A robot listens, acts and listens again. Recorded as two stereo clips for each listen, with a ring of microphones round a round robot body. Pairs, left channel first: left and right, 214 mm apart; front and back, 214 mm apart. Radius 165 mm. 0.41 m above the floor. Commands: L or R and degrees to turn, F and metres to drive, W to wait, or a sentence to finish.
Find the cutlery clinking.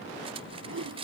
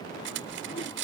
R155
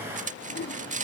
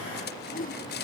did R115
R35
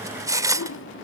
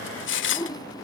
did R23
R15
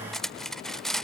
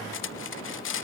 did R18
Found it: cutlery clinking, straight ahead.